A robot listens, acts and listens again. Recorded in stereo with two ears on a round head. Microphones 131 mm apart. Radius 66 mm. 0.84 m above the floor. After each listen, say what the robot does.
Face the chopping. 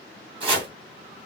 Turn 35° right.
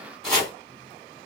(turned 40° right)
Found it: chopping, straight ahead, 2 to 4 m away.